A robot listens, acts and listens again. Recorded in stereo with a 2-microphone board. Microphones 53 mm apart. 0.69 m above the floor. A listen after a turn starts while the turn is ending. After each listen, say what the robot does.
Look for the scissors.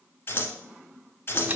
Turn 40° left.
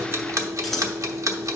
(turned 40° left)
Keep listening.
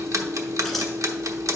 Keep listening.
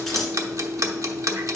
Facing the scissors.